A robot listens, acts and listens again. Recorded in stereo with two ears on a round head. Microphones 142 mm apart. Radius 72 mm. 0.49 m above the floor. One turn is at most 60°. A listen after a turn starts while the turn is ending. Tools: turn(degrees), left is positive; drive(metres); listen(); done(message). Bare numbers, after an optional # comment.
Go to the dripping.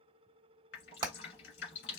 turn(60)
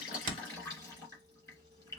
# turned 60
# So it is at 20° left.
turn(20)
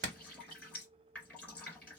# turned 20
# The dripping is now 10° left.
turn(10)
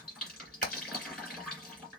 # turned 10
drive(1.0)
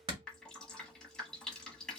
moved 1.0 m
drive(1.0)
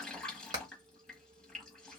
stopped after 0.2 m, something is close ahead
done("I am next to the dripping.")